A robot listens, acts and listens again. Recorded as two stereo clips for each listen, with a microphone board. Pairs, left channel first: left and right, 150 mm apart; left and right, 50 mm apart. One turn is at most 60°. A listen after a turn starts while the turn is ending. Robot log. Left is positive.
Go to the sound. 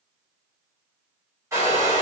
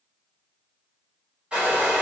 note: The hair dryer: about 20° right or 160° right.
cmd yaw -20
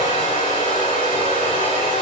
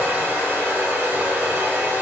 note: So it is at 140° right.
cmd yaw -60
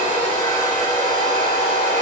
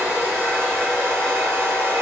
note: The hair dryer is now 80° right.
cmd yaw -60
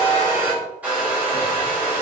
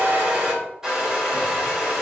note: The hair dryer is now 15° right.
cmd yaw -15
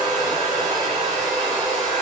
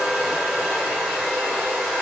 cmd fwd 1.0
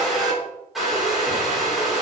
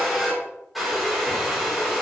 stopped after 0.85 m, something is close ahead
end: Arrived at the hair dryer, straight ahead.